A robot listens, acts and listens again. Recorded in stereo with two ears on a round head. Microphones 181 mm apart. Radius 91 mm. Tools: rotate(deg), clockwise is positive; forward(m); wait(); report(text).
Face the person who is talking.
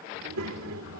rotate(90)
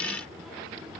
report("Found it: a child speaking, straight ahead, 2 to 4 m away.")